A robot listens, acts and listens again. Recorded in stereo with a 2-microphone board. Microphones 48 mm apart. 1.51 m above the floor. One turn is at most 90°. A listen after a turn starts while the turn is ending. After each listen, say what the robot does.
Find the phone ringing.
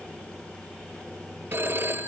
Turn 50° right.
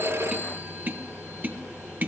Keep listening.
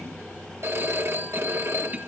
Turn 70° right.
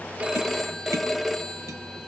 Facing the phone ringing, 1 to 2 m away.